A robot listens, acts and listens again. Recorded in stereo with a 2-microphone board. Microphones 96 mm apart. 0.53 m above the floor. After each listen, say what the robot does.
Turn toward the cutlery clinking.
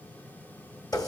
Keep listening.
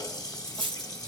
Turn 55° right.
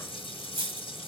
Turn 70° right.
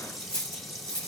Turn 10° left.
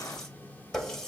Keep listening.
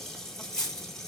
Found it: cutlery clinking, straight ahead.